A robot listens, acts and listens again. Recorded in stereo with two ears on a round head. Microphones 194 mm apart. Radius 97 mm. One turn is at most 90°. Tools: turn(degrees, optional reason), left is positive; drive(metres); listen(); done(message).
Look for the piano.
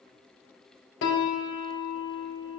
turn(degrees=60, reason="The piano: about 60° left or 120° left.")
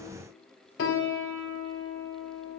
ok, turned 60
turn(degrees=60, reason="So it is at 60° left.")
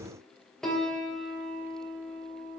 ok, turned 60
done("Found it: a piano, straight ahead.")